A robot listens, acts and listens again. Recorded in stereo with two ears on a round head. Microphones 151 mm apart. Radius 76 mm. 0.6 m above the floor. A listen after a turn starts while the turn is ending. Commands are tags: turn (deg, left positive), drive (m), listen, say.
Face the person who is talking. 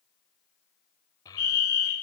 <turn deg="20"/>
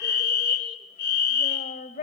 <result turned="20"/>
<turn deg="40"/>
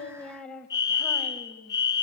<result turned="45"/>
<turn deg="15"/>
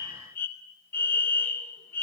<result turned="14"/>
<listen/>
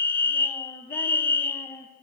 <turn deg="10"/>
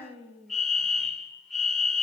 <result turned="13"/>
<say>Found it: a child speaking, straight ahead.</say>